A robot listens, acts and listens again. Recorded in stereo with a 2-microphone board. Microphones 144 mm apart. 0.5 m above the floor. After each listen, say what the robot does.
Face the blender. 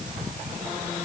Keep listening.
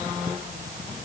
Keep listening.
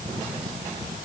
I can't make out a blender to turn to.